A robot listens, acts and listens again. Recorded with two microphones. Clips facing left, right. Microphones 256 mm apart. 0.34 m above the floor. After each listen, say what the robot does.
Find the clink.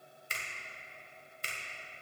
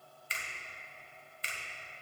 Keep listening.
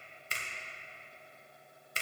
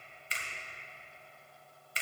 Keep listening.
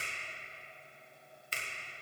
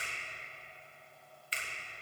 I can't make out a clink, only a finger snap.